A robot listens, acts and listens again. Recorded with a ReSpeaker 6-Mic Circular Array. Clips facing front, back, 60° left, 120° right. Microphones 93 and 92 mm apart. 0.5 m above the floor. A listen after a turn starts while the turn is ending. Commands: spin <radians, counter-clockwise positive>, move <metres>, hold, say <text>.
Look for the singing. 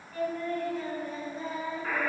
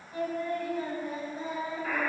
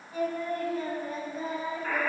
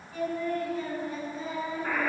spin 1.66
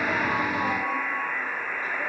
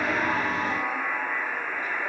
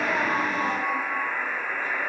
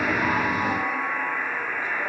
hold
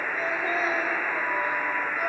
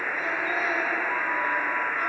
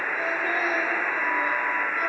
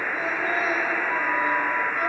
hold
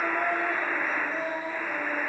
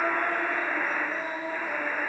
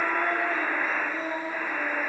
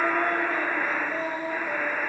spin -1.66
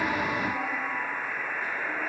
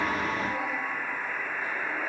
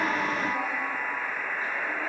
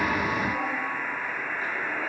hold
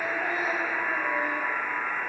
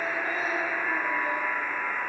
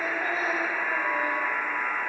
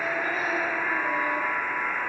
hold
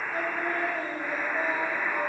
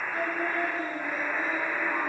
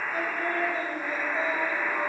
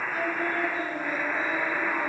say Facing the singing, 1 to 2 m away.